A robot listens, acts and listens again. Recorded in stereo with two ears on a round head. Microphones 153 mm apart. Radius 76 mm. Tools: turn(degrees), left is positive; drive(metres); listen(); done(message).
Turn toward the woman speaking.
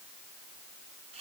listen()
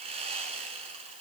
listen()
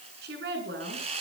turn(degrees=-65)
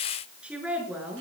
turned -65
turn(degrees=-10)
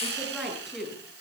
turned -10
done("Found it: a woman speaking, straight ahead.")